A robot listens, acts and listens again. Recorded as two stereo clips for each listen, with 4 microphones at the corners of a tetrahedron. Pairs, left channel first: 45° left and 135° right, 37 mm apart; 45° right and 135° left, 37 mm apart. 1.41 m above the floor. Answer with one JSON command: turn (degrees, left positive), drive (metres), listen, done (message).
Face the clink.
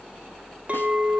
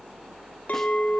{"turn": -85}
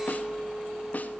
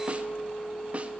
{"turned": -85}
{"turn": -35}
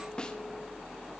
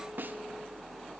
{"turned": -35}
{"listen": true}
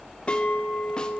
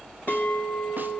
{"turn": -10}
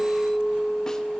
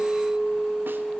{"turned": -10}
{"done": "Facing the clink."}